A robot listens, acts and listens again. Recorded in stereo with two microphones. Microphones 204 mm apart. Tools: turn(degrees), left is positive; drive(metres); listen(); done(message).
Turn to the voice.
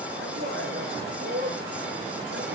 turn(degrees=-65)
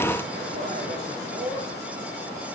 turn(degrees=-45)
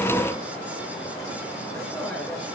done("Facing the man speaking.")